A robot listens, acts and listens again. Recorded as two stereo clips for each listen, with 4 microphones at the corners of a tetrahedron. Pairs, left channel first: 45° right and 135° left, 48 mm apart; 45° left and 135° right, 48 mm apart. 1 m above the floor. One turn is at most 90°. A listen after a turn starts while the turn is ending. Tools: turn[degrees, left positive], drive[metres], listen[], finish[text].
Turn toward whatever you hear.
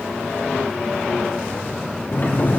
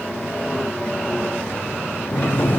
Action: finish[Found it: a sliding door, straight ahead, 2 to 4 m away.]